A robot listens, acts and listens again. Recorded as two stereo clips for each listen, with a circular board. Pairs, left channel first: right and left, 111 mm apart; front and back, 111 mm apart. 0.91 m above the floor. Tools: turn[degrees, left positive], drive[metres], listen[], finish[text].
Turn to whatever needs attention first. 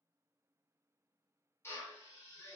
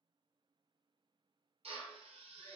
Action: listen[]
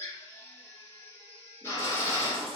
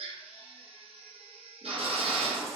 Thought: The baby crying: 125° left.
Action: turn[125]
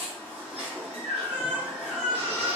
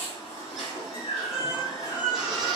Thought: The baby crying is now 15° left.
Action: turn[15]
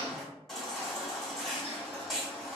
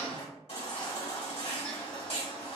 Action: finish[Facing the baby crying, 1 to 2 m away.]